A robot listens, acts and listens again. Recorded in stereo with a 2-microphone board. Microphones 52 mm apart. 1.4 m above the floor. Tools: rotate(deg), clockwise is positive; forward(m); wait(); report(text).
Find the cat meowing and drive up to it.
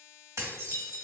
wait()
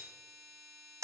wait()
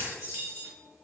report("I can't make out a cat meowing to turn to.")